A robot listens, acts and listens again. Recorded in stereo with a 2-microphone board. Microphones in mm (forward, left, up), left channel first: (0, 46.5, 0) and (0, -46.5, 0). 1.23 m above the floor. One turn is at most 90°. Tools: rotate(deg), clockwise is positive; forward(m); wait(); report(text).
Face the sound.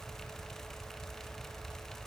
wait()
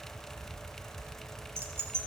rotate(25)
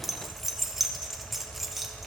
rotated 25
report("Found it: keys jangling, straight ahead.")